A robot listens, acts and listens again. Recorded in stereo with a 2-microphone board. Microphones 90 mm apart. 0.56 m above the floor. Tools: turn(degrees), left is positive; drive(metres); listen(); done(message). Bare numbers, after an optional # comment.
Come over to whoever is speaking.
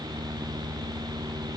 listen()
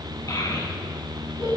# The child speaking: about 40° left or 140° left.
turn(40)
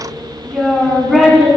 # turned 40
drive(1.0)
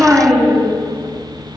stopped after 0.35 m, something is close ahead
done("Blocked. The child speaking is further on, straight ahead.")